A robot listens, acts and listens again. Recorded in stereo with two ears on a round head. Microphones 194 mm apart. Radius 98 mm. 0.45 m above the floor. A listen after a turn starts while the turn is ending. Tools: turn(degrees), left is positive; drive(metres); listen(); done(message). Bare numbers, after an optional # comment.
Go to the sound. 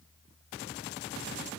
listen()
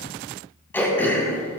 turn(30)
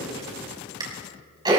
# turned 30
# So it is at 20° right.
turn(-20)
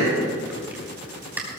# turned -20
# The throat clearing is now 10° right.
turn(-10)
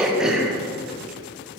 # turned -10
drive(1.0)
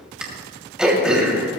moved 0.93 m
drive(1.0)
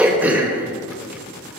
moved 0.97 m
# The throat clearing is now 10° right.
turn(-10)
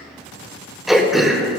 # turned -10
drive(1.0)
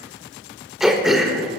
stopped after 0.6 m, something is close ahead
done("I am next to the throat clearing.")